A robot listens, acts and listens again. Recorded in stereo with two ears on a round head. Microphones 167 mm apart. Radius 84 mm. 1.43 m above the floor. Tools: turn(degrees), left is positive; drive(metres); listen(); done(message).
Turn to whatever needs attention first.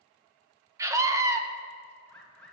turn(degrees=-15)
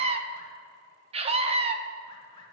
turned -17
turn(degrees=-145)
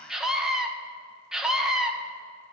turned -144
done("Found it: a scream, straight ahead, 1 to 2 m away.")